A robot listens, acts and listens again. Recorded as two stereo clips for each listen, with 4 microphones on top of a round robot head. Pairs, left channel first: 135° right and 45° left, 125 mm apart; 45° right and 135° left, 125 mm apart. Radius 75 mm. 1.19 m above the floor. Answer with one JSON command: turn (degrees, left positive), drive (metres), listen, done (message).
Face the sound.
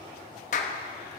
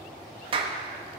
{"turn": -170}
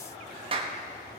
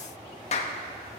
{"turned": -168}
{"done": "Found it: a clap, straight ahead."}